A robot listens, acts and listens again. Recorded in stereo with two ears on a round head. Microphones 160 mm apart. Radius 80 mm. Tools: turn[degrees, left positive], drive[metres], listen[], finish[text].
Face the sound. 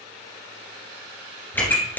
Action: turn[30]
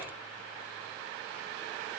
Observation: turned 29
Action: listen[]
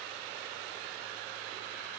Action: finish[I heard a pop, but can't make it out now. It was about 20° right or 140° left.]